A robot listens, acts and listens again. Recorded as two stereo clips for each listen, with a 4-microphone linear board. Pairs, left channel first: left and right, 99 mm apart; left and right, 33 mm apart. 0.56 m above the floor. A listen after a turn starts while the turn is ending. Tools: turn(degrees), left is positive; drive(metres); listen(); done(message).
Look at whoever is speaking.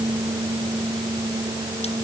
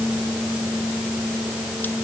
listen()
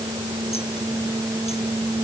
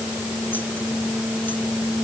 listen()
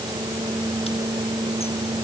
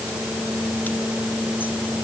done("I can't make out anyone speaking to turn to.")